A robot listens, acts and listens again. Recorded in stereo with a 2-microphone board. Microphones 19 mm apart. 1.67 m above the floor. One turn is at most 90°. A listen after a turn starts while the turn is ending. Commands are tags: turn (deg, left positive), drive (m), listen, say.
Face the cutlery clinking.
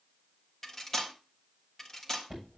<turn deg="15"/>
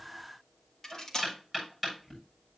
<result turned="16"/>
<turn deg="90"/>
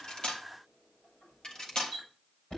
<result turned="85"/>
<turn deg="60"/>
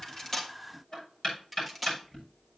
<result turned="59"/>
<say>Found it: cutlery clinking, straight ahead, 1 to 2 m away.</say>